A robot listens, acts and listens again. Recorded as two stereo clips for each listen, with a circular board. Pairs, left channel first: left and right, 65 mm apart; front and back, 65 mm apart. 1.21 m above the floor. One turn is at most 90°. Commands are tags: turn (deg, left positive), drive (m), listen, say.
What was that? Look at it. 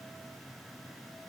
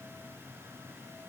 <listen/>
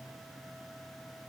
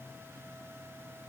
<listen/>
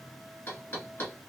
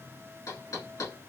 <turn deg="30"/>
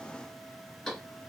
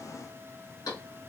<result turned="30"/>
<say>Found it: knocking, straight ahead.</say>